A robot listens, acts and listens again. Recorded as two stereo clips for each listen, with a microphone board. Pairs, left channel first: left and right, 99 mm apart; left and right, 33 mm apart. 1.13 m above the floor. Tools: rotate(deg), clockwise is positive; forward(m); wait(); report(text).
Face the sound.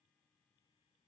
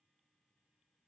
wait()
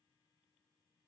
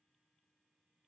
wait()
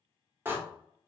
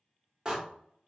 rotate(20)
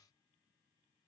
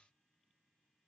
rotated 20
wait()
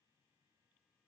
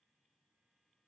report("I heard a door slam, but can't make it out now. It was about straight ahead or 140° right.")